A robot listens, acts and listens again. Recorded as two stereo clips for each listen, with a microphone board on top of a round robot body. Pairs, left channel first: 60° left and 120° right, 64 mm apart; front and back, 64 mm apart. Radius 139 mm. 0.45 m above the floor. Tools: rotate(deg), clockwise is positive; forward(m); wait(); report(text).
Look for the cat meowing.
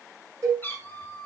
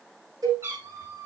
rotate(-120)
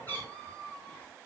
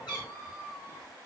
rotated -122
report("Found it: a cat meowing, straight ahead, 2 to 4 m away.")